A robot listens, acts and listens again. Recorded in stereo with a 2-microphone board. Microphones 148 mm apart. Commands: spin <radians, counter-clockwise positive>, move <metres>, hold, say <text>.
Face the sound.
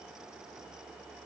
hold
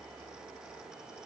hold
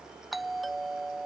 spin 0.52
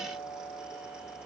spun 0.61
spin 2.53
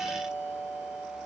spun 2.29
spin 0.26
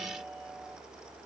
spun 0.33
hold
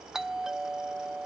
say Facing the doorbell.